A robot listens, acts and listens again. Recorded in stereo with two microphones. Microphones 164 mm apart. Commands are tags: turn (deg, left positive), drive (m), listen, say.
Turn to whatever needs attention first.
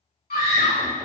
<turn deg="60"/>
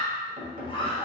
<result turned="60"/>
<turn deg="40"/>
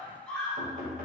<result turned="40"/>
<say>Facing the scream, 1 to 2 m away.</say>